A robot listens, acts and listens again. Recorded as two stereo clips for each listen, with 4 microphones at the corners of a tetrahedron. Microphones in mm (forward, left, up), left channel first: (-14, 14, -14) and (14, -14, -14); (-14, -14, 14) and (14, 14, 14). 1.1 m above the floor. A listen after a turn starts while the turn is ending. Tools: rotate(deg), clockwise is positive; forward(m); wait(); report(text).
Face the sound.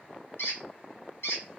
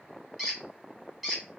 rotate(-130)
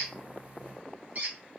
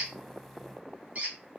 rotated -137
report("Found it: a squeak, straight ahead, 1 to 2 m away.")